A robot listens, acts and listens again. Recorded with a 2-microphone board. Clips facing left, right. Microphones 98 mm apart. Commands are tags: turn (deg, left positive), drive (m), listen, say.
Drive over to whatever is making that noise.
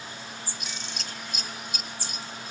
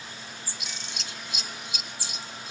<turn deg="45"/>
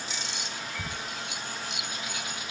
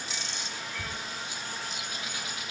<turn deg="85"/>
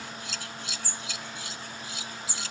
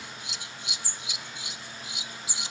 <turn deg="-20"/>
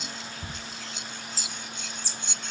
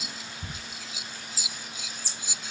<drive m="1.0"/>
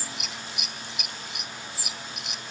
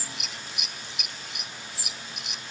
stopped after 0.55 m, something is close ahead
<say>Something is in my way. I am facing the scissors but have not reached it.</say>